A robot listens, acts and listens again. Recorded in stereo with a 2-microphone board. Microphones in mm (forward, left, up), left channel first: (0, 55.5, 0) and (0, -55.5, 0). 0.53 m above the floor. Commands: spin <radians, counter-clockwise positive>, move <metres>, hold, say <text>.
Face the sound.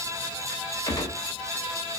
spin 0.61
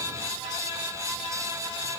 hold
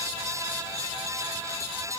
say I heard a gunshot, but can't make it out now. It was about straight ahead or 110° left.